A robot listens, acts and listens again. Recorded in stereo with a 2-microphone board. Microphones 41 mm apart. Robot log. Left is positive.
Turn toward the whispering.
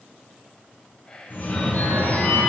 note: The whispering: about 20° left or 160° left.
cmd yaw +20
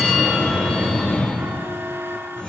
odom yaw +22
cmd idle
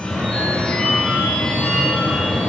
cmd idle
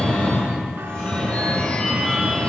end: I heard whispering, but can't make it out now. It was about straight ahead or 135° left.